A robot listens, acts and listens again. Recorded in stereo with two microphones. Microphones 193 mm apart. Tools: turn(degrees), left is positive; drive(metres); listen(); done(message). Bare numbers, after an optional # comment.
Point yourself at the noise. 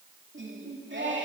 # The singing: about 70° right or 110° right.
turn(-70)
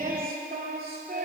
# So it is at 55° right.
turn(-55)
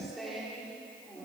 done("Facing the singing.")